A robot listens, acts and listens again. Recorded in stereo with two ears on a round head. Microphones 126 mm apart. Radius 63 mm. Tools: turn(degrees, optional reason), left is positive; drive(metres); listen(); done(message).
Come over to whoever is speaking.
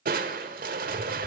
listen()
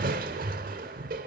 listen()
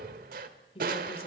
turn(degrees=40, reason="The woman speaking: about 40° left or 140° left.")
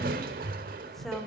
drive(metres=1.0)
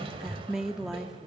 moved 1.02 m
drive(metres=1.0)
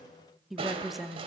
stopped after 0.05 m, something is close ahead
done("Arrived at the woman speaking, straight ahead.")